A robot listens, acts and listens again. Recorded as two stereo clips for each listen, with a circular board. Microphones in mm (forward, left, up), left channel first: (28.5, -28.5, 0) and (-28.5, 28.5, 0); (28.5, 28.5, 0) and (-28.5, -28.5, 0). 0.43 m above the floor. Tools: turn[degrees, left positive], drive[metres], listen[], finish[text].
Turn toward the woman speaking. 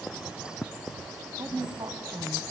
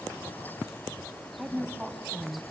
Thought: The woman speaking: 145° left.
Action: turn[145]
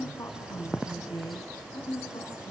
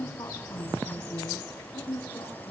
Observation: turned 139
Action: finish[Found it: a woman speaking, straight ahead, over 4 m away.]